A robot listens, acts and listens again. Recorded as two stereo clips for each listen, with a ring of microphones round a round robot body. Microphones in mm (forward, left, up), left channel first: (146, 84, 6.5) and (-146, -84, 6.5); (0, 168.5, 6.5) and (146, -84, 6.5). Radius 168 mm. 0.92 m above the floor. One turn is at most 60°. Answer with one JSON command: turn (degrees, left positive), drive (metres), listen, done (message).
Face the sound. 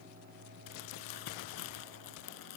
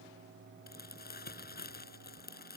{"turn": 60}
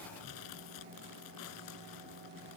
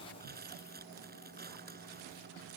{"done": "Facing the crumpling."}